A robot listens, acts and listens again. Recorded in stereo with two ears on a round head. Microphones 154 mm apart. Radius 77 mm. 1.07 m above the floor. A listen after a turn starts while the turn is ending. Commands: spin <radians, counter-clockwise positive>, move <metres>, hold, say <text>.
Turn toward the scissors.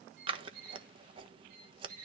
spin -0.52
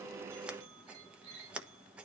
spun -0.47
spin -0.17
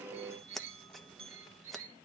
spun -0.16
say Facing the scissors.